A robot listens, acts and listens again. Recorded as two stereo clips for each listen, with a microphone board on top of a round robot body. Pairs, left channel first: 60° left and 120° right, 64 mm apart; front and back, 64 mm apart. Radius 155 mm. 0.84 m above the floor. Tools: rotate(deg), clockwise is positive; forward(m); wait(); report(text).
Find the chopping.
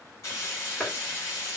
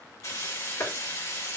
rotate(30)
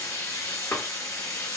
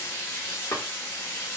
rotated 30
report("Facing the chopping, 1 to 2 m away.")